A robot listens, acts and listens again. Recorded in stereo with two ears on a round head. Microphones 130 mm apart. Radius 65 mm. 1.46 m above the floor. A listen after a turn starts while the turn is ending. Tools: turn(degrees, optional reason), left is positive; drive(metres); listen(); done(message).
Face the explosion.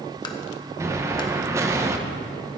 turn(degrees=-20, reason="The explosion: about 20° right or 160° right.")
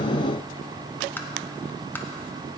listen()
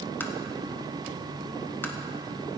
done("I heard an explosion, but can't make it out now. It was about straight ahead or 140° right.")